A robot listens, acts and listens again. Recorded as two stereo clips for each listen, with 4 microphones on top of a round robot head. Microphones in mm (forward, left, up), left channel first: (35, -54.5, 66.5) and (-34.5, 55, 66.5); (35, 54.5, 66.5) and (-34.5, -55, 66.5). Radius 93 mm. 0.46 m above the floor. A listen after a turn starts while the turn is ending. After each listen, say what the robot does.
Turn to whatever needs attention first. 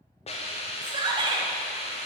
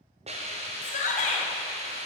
Turn 70° left.
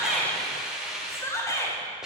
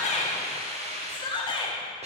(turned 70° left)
Turn 10° left.
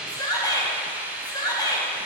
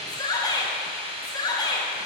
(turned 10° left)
Facing the shout, 1 to 2 m away.